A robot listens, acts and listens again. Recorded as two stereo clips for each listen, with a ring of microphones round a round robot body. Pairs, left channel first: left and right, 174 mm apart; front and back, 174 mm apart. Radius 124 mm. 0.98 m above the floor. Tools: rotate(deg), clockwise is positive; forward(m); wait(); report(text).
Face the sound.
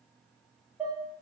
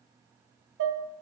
rotate(175)
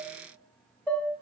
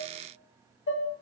report("Found it: dishes clattering, straight ahead, 1 to 2 m away.")